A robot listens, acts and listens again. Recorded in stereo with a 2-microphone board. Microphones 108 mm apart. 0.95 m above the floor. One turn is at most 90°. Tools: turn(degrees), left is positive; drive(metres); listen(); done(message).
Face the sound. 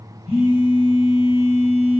turn(degrees=55)
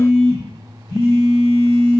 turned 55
turn(degrees=40)
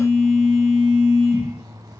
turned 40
done("Facing the phone buzzing, 1 to 2 m away.")